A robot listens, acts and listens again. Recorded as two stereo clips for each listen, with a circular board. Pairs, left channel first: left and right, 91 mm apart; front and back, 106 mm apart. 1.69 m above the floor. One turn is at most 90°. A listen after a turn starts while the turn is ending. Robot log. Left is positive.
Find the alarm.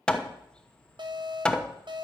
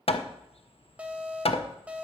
note: The alarm: 105° right.
cmd yaw -90
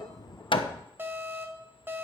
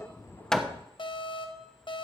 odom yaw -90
note: The alarm is now 30° right.
cmd yaw -30
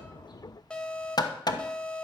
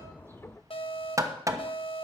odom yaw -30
note: The alarm is now 10° left.
cmd yaw +10
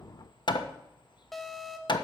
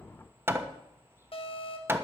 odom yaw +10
end: Found it: an alarm, straight ahead, 1 to 2 m away.